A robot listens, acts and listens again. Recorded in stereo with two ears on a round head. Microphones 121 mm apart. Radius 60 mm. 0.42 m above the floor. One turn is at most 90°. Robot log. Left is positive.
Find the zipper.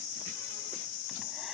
cmd idle
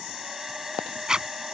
cmd yaw -30
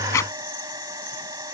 cmd idle
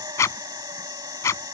note: So it is at 25° left.
cmd yaw +25
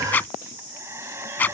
note: The zipper is now 15° left.
cmd yaw +15
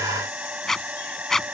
end: Found it: a zipper, straight ahead.